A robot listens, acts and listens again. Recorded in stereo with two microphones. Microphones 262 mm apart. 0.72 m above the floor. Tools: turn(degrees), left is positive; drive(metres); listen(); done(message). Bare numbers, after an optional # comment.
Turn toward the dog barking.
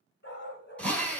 # The dog barking: about 40° left or 140° left.
turn(40)
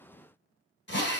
listen()
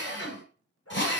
# So it is at 120° left.
turn(120)
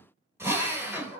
# The dog barking is now 20° right.
turn(-20)
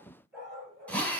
done("Found it: a dog barking, straight ahead, 2 to 4 m away.")